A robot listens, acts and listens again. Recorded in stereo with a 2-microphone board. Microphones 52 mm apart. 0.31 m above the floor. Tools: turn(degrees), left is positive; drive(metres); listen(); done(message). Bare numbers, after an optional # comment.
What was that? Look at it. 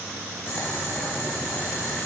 # The boiling: about 40° left or 140° left.
turn(40)
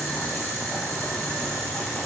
done("Found it: boiling, straight ahead.")